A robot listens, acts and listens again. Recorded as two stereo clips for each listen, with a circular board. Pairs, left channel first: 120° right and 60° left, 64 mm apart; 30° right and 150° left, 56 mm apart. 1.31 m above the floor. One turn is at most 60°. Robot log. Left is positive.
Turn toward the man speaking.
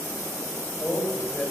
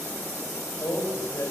note: The man speaking: 50° right.
cmd yaw -50
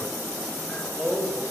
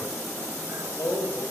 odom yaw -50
note: The man speaking is now 15° right.
cmd yaw -15
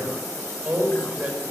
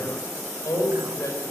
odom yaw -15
end: Facing the man speaking.